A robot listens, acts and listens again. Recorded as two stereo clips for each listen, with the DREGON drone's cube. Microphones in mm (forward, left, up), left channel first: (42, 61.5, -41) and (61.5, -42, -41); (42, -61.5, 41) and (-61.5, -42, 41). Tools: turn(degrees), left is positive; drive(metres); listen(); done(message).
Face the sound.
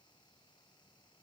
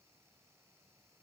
listen()
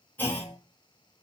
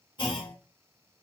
turn(degrees=30)
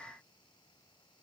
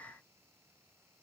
done("Facing where the clunk came from. I can't hear it now.")